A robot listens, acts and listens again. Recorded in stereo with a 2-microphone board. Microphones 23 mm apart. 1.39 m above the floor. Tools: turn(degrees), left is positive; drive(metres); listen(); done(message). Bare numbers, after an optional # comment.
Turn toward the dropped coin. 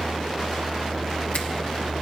listen()
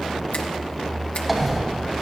turn(30)
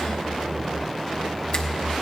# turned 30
listen()
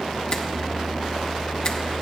done("I heard a dropped coin, but can't make it out now. It was about 30° right or 150° left.")